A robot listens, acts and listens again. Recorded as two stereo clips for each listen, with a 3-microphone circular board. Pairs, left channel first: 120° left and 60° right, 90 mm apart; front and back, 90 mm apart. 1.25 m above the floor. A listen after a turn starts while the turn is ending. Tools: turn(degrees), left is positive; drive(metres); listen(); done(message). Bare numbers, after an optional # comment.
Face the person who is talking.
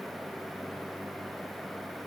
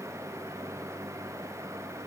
listen()
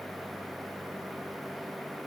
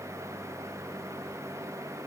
listen()
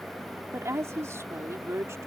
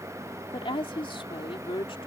done("Facing the woman speaking.")